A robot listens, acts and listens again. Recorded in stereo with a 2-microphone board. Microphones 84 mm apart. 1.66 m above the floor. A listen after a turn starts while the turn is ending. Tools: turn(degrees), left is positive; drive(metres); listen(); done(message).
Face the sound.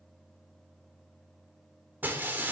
turn(degrees=-25)
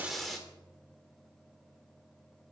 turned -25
done("Found it: breaking glass, straight ahead.")